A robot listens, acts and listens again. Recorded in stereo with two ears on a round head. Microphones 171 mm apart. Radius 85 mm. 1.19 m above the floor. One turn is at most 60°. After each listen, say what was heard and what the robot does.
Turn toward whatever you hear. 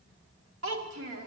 Turn 60° right.
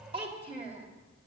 So it is at 30° right. Turn 30° right.
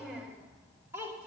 The child speaking is now 10° right. Turn 10° right.
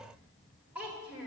The child speaking is now 10° right. Turn 10° right.
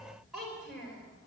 Facing the child speaking.